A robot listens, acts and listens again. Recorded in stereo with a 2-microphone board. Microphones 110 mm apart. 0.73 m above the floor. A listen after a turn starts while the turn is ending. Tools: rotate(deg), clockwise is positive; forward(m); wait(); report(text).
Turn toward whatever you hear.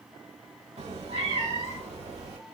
rotate(90)
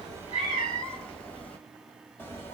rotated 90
rotate(-20)
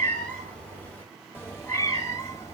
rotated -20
rotate(-25)
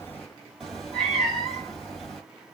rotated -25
report("Facing the cat meowing.")